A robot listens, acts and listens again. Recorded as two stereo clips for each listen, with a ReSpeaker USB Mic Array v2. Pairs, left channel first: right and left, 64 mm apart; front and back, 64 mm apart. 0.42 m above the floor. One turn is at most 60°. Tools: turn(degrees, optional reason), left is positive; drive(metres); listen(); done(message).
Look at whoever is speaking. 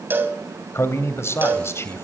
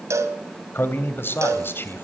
turn(degrees=-50, reason="The man speaking: 50° right.")
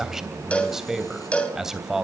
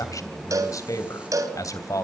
done("Facing the man speaking, 2 to 4 m away.")